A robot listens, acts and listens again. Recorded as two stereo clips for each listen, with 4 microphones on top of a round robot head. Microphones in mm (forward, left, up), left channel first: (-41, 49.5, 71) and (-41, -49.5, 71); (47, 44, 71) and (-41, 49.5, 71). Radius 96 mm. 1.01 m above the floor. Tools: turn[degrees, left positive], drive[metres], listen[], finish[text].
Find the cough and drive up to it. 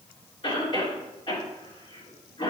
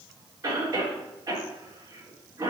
Thought: The cough: 120° left.
Action: turn[120]
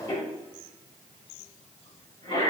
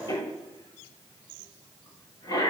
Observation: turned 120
Thought: The cough is now 35° left.
Action: turn[35]
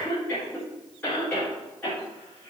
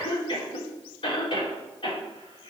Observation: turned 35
Thought: The cough is now 15° left.
Action: turn[15]
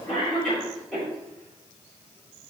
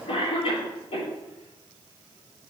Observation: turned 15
Action: drive[1.0]
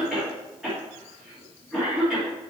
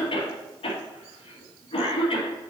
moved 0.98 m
Action: drive[1.0]
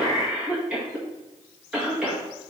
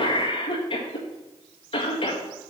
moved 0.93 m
Thought: The cough is now 10° right.
Action: turn[-10]
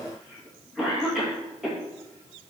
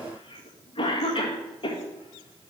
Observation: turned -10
Action: drive[1.0]
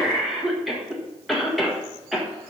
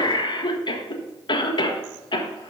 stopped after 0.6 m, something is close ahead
Action: finish[I am next to the cough.]